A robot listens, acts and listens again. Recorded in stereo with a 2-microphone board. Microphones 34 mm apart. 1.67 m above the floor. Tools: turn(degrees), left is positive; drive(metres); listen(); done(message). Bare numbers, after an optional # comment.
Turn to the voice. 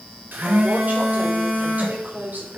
# The woman speaking: about 55° right or 125° right.
turn(-55)
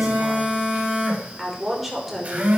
done("Facing the woman speaking.")